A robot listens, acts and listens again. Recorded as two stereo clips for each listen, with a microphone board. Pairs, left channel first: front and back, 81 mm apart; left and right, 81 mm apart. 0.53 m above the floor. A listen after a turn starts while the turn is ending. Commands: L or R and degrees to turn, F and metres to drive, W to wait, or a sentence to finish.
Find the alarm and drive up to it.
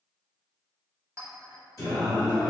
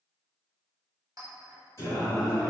W
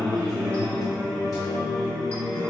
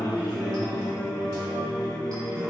W
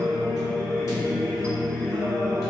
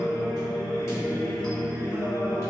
I can't make out an alarm, only a clink and singing.